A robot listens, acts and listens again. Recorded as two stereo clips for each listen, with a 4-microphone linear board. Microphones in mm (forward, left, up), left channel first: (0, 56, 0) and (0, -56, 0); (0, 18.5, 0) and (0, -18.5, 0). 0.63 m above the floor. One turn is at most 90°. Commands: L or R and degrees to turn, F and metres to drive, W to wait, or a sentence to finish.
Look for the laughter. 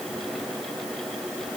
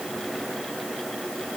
W
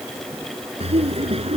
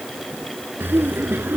R60
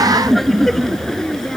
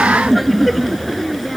Found it: laughter, straight ahead.